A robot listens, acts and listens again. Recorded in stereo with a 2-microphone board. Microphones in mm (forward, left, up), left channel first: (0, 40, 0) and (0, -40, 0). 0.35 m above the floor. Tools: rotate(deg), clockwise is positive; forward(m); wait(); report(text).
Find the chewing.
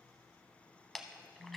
rotate(-30)
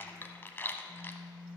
rotate(-155)
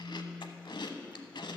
rotate(-75)
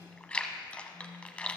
rotate(-15)
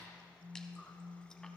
wait()
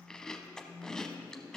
rotate(-10)
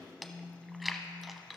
report("Found it: chewing, straight ahead.")